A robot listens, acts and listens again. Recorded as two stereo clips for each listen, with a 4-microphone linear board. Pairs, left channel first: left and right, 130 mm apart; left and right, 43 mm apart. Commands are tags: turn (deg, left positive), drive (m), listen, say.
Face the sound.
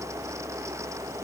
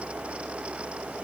<listen/>
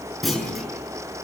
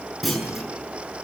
<turn deg="30"/>
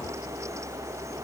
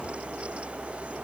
<listen/>
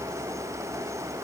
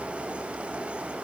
<say>I heard a clunk, but can't make it out now. It was about 30° right or 150° left.</say>